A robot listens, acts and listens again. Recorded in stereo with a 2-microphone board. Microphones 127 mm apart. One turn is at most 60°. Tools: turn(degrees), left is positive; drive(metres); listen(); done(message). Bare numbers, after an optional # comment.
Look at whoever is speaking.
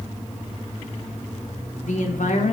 # The woman speaking: about 75° left or 105° left.
turn(60)
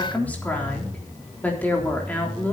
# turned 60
# So it is at 15° left.
turn(15)
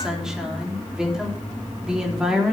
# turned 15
done("Facing the woman speaking, 2 to 4 m away.")